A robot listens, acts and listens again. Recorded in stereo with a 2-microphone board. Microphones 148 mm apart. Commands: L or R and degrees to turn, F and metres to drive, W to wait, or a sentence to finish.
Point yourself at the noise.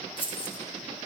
L40
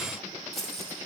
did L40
Found it: keys jangling, straight ahead.